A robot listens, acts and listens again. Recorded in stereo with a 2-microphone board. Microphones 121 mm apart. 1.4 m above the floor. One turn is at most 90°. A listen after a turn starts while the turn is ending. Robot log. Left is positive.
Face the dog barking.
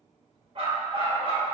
note: The dog barking: about 45° right or 135° right.
cmd yaw -45
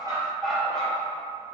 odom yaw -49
note: So it is at 15° left.
cmd yaw +15
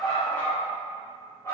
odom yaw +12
note: The dog barking is now 25° left.
cmd yaw +25
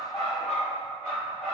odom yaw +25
note: The dog barking is now 15° left.
cmd yaw +15
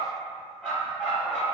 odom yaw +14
end: Found it: a dog barking, straight ahead, 2 to 4 m away.